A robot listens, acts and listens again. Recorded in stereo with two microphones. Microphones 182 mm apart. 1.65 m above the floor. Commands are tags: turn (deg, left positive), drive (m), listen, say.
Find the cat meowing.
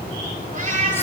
<turn deg="-45"/>
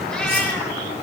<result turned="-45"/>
<listen/>
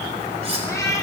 <turn deg="20"/>
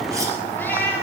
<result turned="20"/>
<turn deg="15"/>
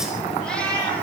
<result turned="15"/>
<say>Found it: a cat meowing, straight ahead.</say>